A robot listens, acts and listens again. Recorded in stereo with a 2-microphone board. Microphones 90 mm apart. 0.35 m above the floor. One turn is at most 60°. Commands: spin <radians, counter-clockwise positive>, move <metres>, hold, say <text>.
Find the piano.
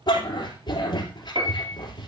spin -1.05
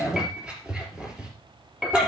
say Found it: a piano, straight ahead, 2 to 4 m away.